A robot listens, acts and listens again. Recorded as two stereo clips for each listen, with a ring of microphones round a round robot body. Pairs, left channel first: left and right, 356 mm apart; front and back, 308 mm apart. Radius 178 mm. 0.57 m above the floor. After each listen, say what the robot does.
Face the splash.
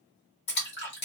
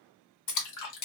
Turn 25° left.
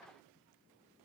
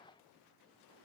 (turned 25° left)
I heard a splash from this way, but can't make it out now.